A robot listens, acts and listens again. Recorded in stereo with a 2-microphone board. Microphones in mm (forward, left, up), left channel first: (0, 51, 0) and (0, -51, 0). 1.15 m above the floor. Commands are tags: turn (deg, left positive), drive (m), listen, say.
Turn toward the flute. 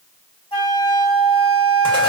<turn deg="60"/>
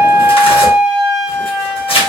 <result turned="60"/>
<say>Facing the flute.</say>